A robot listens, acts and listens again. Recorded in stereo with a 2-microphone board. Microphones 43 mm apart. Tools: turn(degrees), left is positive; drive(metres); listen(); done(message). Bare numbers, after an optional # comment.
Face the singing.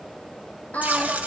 # The singing: about 40° left or 140° left.
turn(40)
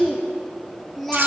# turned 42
done("Found it: singing, straight ahead.")